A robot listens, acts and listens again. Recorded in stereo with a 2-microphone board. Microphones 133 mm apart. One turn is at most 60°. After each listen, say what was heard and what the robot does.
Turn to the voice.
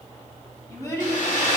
The child speaking: about 25° left or 155° left. Turn 25° left.
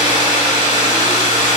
Keep listening.
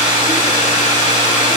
Keep listening.
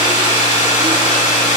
I heard a child speaking, but can't make it out now. It was about straight ahead or 130° left.